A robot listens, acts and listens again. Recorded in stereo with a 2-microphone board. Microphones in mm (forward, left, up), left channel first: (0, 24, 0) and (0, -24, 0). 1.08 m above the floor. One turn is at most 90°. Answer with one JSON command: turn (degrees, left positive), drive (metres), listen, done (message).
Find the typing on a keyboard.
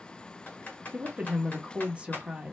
{"turn": 35}
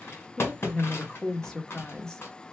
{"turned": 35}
{"turn": 90}
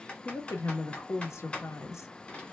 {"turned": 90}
{"turn": 30}
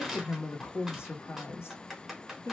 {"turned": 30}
{"done": "Found it: typing on a keyboard, straight ahead, 1 to 2 m away."}